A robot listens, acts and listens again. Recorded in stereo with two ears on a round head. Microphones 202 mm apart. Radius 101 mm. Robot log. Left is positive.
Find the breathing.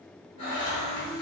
note: The breathing: about 30° left or 150° left.
cmd yaw +30
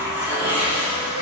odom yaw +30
cmd idle
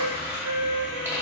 cmd idle
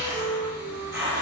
end: I heard breathing, but can't make it out now. It was about straight ahead or 120° left.